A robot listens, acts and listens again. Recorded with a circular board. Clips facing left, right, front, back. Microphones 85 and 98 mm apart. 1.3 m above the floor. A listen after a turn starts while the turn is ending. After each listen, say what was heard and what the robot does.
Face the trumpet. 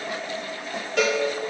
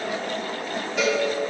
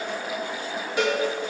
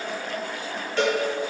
Keep listening.
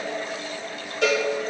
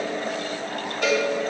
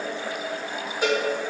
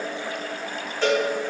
Keep listening.
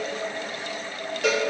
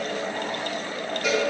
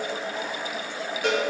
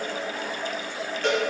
I can't make out a trumpet to turn to.